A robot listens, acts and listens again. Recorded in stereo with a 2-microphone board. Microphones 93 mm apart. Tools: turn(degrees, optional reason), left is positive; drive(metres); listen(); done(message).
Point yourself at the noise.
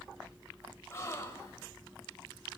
turn(degrees=30, reason="The gasp: about 30° left or 150° left.")
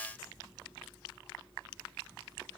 listen()
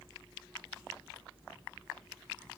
done("I heard a gasp, but can't make it out now. It was about straight ahead or 120° left.")